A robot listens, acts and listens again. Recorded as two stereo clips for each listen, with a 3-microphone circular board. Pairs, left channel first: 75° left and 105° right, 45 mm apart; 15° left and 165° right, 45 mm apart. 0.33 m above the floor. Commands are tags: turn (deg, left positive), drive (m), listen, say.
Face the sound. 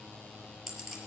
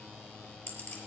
<turn deg="-20"/>
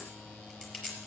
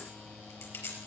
<say>Found it: a clink, straight ahead, over 4 m away.</say>